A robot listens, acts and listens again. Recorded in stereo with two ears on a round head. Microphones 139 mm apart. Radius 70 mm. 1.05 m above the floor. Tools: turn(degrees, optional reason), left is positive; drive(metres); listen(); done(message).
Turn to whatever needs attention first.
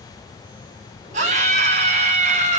turn(degrees=-50, reason="The scream: about 50° right or 130° right.")
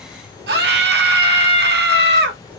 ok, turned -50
turn(degrees=-80, reason="So it is at 80° right.")
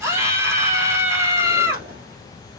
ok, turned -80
turn(degrees=-20, reason="The scream is now 20° right.")
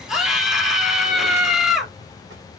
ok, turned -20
done("Facing the scream, 2 to 4 m away.")